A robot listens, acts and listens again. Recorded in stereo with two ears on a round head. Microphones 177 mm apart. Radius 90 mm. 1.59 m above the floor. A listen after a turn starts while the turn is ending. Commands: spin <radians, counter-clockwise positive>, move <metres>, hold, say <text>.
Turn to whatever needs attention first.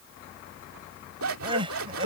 spin -0.44
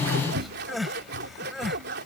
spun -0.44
say Facing the crying.